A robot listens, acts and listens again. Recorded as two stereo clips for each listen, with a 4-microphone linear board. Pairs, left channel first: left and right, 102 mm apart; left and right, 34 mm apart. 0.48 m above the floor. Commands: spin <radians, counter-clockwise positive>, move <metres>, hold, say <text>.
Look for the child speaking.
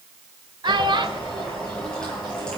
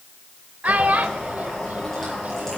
spin -0.87
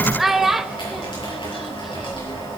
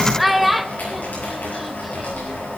say Found it: a child speaking, straight ahead.